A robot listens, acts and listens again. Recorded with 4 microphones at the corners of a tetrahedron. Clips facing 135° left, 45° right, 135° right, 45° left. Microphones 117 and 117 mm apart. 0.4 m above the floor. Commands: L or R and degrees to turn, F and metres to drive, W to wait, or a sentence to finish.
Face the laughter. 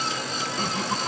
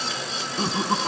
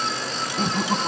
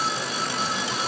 R105
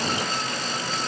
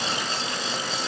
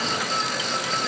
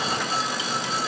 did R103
W
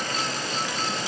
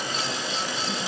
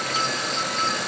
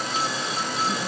W
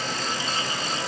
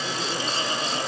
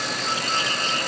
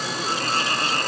Facing where the laughter came from. I can't hear it now.